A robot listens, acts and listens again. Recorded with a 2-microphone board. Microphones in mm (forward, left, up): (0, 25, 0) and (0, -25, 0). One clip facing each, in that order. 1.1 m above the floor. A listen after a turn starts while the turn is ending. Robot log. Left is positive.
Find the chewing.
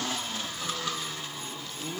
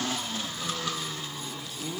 cmd idle
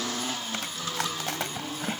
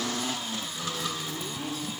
note: The chewing: about 70° left or 110° left.
cmd yaw +70
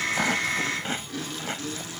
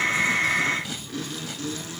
note: So it is at 40° left.
cmd yaw +40
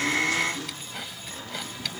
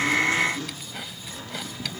end: Facing the chewing.